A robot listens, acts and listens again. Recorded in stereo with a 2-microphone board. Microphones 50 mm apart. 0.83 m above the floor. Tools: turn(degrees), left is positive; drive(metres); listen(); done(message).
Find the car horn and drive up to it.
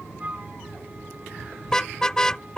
turn(degrees=30)
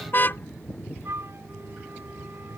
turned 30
turn(degrees=135)
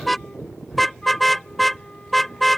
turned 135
drive(metres=1.0)
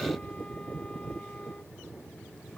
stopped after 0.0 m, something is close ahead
listen()
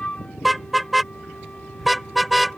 done("Something is in my way. I am facing the car horn but have not reached it.")